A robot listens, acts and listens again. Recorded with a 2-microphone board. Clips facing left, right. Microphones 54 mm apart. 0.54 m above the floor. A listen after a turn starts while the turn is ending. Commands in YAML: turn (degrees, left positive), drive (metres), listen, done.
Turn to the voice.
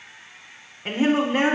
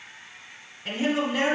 turn: 35
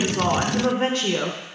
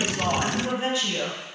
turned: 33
turn: 105
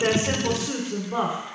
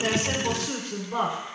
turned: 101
done: "Found it: a woman speaking, straight ahead."